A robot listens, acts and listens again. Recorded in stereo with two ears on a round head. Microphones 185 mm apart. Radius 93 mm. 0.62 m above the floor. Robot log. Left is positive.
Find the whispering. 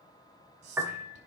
note: The whispering: about 55° right or 125° right.
cmd yaw -55
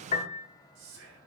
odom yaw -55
note: So it is at 70° right.
cmd yaw -70
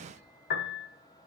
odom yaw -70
cmd idle
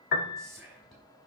end: Facing the whispering, over 4 m away.